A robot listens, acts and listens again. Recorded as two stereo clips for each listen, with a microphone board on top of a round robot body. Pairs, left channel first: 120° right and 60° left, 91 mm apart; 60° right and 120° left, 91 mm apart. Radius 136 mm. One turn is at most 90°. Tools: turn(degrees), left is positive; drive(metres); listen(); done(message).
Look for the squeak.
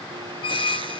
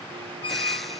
turn(degrees=-90)
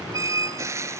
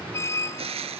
done("Facing the squeak.")